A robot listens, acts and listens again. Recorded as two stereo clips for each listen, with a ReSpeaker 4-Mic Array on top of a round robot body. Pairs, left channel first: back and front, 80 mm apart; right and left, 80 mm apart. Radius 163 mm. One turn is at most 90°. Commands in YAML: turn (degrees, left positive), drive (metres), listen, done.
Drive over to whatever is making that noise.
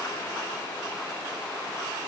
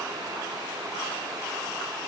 listen: true
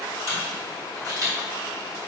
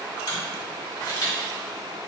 turn: -50
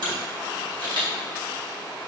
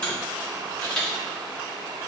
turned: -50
turn: -15
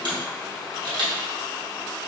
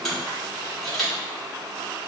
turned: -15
drive: 1.0
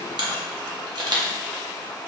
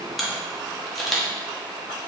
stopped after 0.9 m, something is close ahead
done: "I am next to the camera shutter."